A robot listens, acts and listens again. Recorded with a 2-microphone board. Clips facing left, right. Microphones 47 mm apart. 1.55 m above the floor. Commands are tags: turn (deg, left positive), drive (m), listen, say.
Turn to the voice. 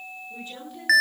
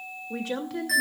<turn deg="-75"/>
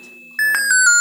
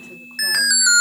<listen/>
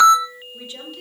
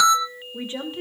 <turn deg="-30"/>
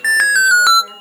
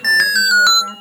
<listen/>
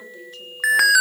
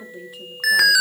<turn deg="-10"/>
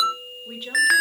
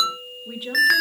<say>Facing the woman speaking.</say>